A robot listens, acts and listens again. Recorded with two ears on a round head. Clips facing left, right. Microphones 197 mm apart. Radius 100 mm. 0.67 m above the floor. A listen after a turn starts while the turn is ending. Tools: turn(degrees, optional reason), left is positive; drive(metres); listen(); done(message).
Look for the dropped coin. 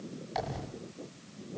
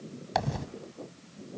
turn(degrees=-70, reason="The dropped coin: about 70° right or 110° right.")
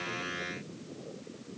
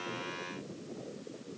listen()
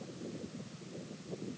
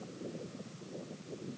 done("I heard a dropped coin, but can't make it out now. It was about straight ahead or 40° right.")